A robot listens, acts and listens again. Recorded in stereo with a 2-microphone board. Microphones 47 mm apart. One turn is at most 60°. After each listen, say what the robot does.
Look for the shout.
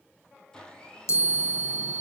Keep listening.
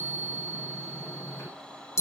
Keep listening.
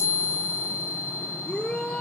Turn 20° left.
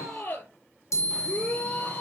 Turn 60° left.
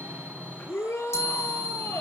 Turn 60° left.
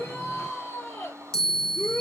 Turn 60° left.
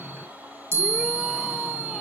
Keep listening.
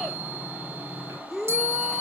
Facing the shout, over 4 m away.